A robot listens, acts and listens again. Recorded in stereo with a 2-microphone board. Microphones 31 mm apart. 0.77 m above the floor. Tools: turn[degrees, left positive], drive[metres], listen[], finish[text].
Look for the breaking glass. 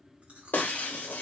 Action: turn[90]
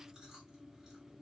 Action: finish[I heard breaking glass from this way, but can't make it out now.]